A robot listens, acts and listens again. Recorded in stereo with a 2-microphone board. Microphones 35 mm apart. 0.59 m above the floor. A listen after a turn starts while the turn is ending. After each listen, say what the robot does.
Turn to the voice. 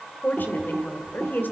Turn 70° left.
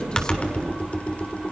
Keep listening.
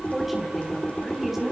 Turn 10° right.
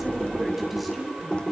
Facing the woman speaking.